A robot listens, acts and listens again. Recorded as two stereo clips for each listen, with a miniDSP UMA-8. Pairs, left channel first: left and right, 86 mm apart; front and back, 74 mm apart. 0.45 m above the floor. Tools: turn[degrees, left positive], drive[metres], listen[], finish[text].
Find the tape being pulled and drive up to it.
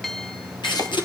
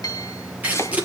Thought: The tape being pulled: 110° left.
Action: turn[110]
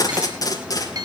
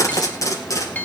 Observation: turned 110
Thought: The tape being pulled is now 45° left.
Action: turn[45]
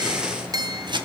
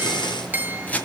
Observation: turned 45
Thought: The tape being pulled is now 10° right.
Action: turn[-10]
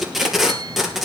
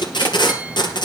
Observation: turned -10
Action: drive[1.0]
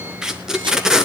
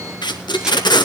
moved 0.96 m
Action: drive[1.0]
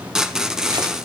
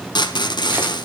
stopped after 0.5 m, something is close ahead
Action: finish[I am next to the tape being pulled.]